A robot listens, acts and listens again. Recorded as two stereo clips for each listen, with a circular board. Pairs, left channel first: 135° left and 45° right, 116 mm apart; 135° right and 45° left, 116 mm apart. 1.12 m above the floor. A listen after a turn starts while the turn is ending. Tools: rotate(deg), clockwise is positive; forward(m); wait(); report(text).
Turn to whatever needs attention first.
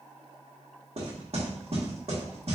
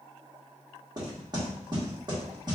wait()
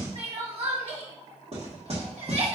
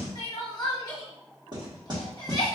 rotate(75)
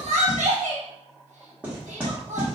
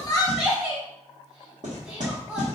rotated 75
rotate(30)
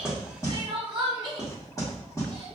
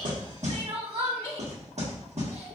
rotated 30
report("Found it: crying, straight ahead, 1 to 2 m away.")